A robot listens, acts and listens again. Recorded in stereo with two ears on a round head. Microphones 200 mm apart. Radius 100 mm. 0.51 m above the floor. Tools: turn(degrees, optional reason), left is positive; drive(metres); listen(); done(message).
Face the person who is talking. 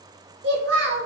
turn(degrees=-55, reason="The child speaking: about 55° right or 125° right.")
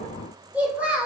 turn(degrees=-10, reason="So it is at 10° right.")
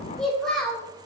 done("Found it: a child speaking, straight ahead.")